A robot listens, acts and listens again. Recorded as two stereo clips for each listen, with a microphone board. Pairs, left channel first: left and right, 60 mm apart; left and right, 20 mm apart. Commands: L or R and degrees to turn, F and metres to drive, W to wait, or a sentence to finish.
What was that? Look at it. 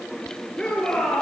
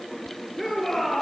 L30
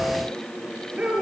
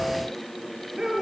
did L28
R15
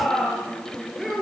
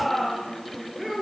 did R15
Facing the shout.